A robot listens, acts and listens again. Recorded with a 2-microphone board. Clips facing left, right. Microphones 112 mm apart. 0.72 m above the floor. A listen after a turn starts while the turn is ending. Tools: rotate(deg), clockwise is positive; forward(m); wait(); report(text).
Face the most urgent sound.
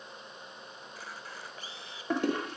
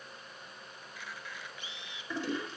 wait()
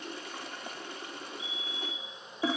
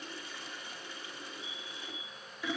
rotate(-30)
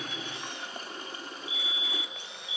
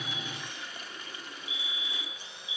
rotate(25)
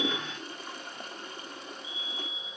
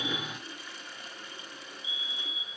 rotate(10)
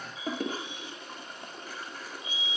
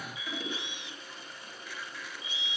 report("Found it: a fire alarm, straight ahead, over 4 m away.")